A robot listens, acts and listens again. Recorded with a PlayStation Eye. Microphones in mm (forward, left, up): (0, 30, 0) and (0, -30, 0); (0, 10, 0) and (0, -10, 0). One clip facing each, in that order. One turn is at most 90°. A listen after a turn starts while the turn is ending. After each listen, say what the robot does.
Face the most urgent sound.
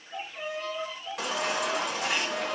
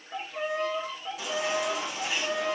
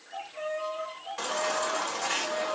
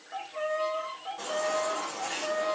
Turn 70° left.
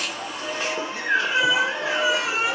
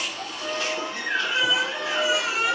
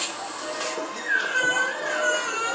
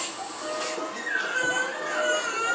Turn 25° left.
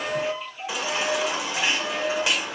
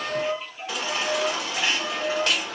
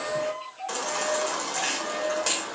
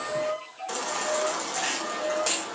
Turn 10° left.
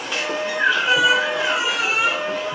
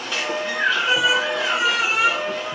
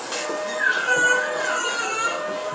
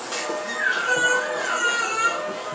Found it: a baby crying, straight ahead.